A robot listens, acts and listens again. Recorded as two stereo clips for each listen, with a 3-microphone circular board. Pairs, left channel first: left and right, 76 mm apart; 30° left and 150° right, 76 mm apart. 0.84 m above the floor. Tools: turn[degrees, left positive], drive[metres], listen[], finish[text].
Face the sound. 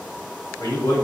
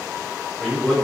Thought: The man speaking: 115° left.
Action: turn[115]
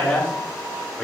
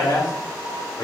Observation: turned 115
Thought: The man speaking is now 15° left.
Action: turn[15]
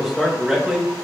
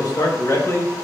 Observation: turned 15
Thought: The man speaking is now 15° right.
Action: turn[-15]
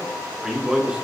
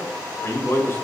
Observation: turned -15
Thought: The man speaking is now 20° right.
Action: turn[-20]
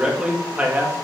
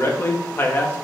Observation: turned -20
Thought: The man speaking is now 25° right.
Action: turn[-25]
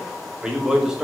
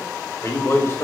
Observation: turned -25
Thought: The man speaking is now 10° right.
Action: turn[-10]
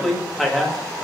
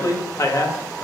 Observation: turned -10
Action: finish[Found it: a man speaking, straight ahead, 1 to 2 m away.]